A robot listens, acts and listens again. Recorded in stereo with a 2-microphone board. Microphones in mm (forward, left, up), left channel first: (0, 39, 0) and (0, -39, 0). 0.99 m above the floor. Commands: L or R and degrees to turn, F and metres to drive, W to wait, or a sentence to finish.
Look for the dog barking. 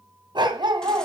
R90
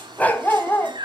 L25
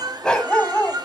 L15
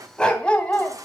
L15
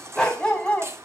L15
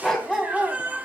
Facing the dog barking.